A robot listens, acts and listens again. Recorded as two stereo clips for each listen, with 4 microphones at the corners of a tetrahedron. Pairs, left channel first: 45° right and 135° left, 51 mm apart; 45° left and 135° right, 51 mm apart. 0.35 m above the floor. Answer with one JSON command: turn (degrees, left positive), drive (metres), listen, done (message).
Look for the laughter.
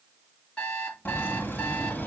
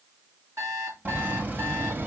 {"turn": -95}
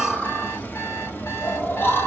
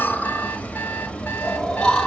{"turn": -30}
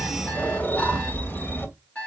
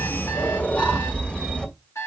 {"turn": -25}
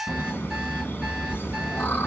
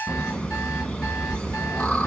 {"turn": -10}
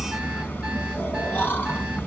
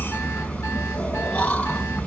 {"done": "Facing the laughter."}